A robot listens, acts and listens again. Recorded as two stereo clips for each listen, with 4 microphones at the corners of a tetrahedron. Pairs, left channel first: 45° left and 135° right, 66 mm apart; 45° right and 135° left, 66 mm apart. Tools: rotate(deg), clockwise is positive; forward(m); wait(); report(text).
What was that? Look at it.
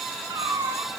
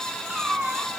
rotate(145)
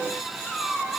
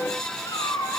rotate(35)
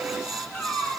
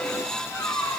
rotate(20)
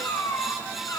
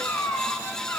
rotate(-10)
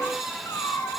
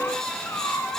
report("Facing the cat meowing, over 4 m away.")